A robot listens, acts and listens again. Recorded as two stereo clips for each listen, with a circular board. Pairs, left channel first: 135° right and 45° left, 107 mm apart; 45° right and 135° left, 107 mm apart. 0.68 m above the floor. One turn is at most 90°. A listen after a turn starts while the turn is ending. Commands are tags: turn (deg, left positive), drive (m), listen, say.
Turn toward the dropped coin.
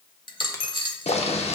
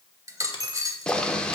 <turn deg="-90"/>
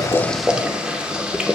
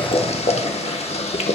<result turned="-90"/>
<turn deg="-80"/>
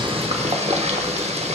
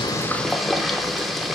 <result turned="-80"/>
<say>I heard a dropped coin from this way, but can't make it out now.</say>